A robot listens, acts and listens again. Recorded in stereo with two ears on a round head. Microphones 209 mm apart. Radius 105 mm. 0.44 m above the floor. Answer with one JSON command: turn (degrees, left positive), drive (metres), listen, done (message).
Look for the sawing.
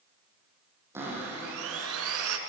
{"turn": -65}
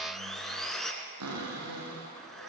{"done": "Facing the sawing."}